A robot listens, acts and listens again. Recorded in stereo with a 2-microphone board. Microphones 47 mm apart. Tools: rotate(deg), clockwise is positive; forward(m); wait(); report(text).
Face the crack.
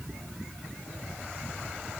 wait()
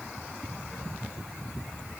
wait()
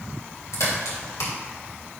rotate(-90)
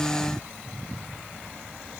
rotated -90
report("Facing where the crack came from. I can't hear it now.")